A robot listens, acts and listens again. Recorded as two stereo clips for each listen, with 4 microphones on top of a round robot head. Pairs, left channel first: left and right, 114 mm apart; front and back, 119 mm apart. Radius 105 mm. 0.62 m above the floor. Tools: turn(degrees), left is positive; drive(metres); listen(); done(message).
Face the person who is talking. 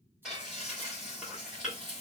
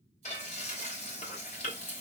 listen()
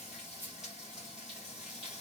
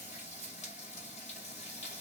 listen()
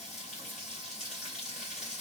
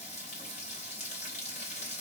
done("I can't make out anyone speaking to turn to.")